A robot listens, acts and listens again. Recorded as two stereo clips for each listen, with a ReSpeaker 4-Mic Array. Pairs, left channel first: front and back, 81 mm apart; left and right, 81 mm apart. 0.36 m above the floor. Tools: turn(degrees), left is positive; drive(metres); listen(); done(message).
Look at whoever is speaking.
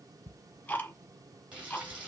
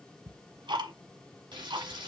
listen()
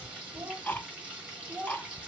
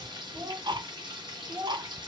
turn(degrees=-120)
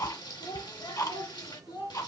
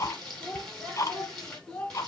turn(degrees=10)
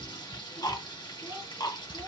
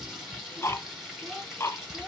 listen()
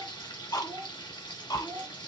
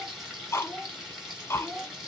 done("Found it: a child speaking, straight ahead.")